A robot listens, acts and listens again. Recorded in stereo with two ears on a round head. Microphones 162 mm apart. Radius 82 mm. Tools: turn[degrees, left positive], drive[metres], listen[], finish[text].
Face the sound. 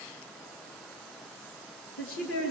Action: turn[90]
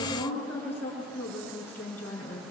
Thought: So it is at 10° left.
Action: turn[10]
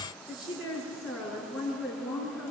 Action: finish[Facing the woman speaking.]